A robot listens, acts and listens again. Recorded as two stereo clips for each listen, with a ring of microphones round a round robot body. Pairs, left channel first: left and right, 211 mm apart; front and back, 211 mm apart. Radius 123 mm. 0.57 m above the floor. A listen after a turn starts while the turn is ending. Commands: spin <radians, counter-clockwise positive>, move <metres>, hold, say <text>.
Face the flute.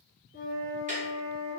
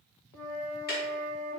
spin 0.52
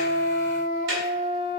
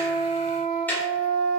spin -0.26
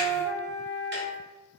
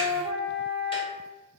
say Facing the flute, 1 to 2 m away.